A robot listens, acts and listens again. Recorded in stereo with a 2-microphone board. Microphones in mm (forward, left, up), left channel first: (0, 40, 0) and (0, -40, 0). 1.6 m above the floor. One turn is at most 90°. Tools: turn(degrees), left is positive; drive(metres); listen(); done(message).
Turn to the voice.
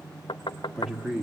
turn(degrees=-30)
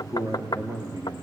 turn(degrees=-90)
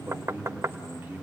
turn(degrees=-25)
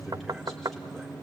listen()
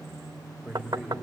done("Found it: a man speaking, straight ahead, over 4 m away.")